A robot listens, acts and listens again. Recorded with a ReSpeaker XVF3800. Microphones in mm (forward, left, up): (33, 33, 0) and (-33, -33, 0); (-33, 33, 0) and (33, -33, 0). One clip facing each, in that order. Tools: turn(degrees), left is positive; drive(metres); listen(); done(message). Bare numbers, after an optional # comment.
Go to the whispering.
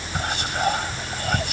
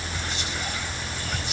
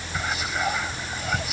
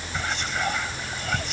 # The whispering: 50° left.
turn(50)
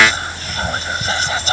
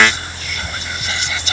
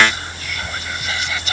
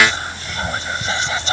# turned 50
drive(1.0)
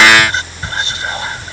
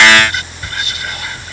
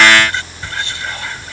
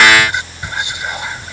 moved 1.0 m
# The whispering is now 15° left.
turn(15)
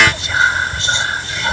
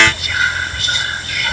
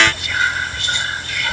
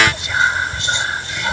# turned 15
drive(1.0)
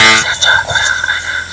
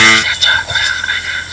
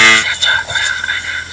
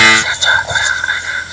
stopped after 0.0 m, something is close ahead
done("Arrived at the whispering, straight ahead.")